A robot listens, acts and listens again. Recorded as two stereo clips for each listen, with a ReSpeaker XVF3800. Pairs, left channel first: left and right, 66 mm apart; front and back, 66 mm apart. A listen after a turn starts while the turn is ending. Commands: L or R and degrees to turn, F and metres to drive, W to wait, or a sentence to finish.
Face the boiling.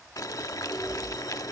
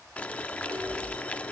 L65
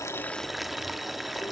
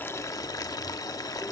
Found it: boiling, straight ahead, 1 to 2 m away.